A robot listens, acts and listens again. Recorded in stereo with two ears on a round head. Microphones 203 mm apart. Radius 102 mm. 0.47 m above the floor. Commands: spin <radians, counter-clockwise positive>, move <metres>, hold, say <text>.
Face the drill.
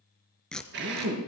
spin -0.87
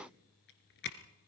hold
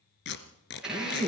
say Facing the drill.